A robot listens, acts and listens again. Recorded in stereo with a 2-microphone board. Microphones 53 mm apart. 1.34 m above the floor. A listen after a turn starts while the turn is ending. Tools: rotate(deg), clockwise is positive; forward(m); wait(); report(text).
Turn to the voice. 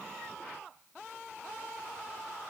wait()
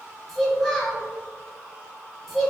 rotate(-30)
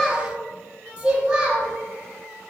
rotate(15)
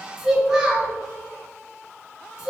report("Found it: a child speaking, straight ahead, 1 to 2 m away.")